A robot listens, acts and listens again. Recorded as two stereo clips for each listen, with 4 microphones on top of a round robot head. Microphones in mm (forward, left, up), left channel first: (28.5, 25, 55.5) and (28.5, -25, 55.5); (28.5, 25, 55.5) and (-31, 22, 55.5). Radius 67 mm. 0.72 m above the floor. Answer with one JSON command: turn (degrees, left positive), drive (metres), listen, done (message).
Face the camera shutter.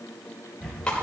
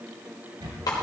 {"turn": -170}
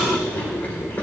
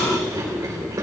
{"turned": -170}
{"listen": true}
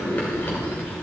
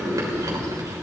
{"listen": true}
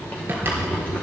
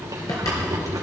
{"turn": -40}
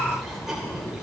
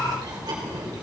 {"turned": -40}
{"listen": true}
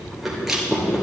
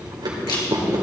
{"turn": -10}
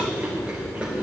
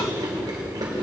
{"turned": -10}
{"listen": true}
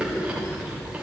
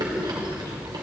{"listen": true}
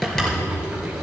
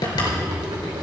{"done": "Facing the camera shutter, 2 to 4 m away."}